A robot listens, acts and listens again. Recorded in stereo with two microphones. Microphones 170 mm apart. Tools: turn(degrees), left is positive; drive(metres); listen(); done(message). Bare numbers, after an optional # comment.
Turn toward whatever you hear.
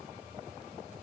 listen()
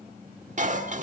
# The dishes clattering: about 45° right or 135° right.
turn(-45)
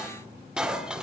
done("Facing the dishes clattering.")